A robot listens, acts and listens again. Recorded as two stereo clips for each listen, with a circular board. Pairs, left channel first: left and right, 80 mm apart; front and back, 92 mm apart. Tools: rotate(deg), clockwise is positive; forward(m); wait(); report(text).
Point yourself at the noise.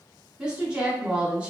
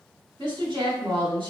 rotate(165)
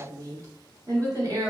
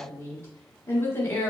rotate(60)
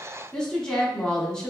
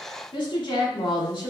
rotate(-10)
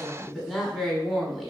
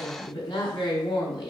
report("Facing the woman speaking.")